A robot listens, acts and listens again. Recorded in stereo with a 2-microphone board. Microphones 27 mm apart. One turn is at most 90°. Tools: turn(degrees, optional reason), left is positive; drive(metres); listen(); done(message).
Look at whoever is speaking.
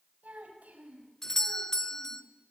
turn(degrees=-75, reason="The child speaking: about 75° right or 105° right.")
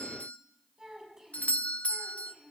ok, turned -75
turn(degrees=-15, reason="So it is at 15° right.")
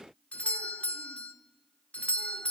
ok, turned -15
listen()
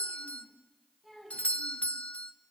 done("Found it: a child speaking, straight ahead.")